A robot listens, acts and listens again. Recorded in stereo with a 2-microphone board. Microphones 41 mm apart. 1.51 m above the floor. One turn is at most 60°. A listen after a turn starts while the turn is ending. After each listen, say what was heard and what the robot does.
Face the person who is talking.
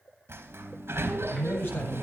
The man speaking: about 60° left or 120° left. Turn 60° left.
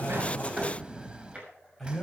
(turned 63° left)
Facing the man speaking.